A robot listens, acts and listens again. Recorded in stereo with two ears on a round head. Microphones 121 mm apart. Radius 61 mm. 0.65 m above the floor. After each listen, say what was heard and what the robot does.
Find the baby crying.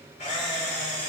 Keep listening.
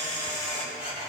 Keep listening.
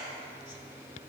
I can't make out a baby crying, only a camera shutter.